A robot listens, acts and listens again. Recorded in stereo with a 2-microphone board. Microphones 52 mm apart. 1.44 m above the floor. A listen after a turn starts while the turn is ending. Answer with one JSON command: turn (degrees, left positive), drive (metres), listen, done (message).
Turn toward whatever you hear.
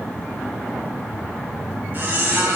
{"turn": -40}
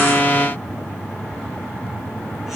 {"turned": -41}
{"listen": true}
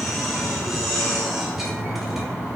{"done": "Found it: a squeak, straight ahead."}